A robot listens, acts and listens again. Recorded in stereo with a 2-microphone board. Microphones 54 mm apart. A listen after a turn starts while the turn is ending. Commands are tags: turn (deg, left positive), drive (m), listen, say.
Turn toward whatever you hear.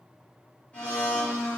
<turn deg="25"/>
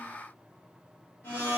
<turn deg="130"/>
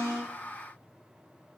<listen/>
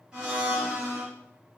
<turn deg="-20"/>
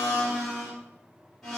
<say>Facing the blender, 1 to 2 m away.</say>